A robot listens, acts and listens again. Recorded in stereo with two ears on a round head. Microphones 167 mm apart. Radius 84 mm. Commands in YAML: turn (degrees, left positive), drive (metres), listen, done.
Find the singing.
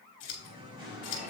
turn: -25
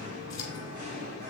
turn: -140
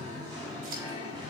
turn: -25
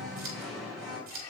done: "Found it: singing, straight ahead."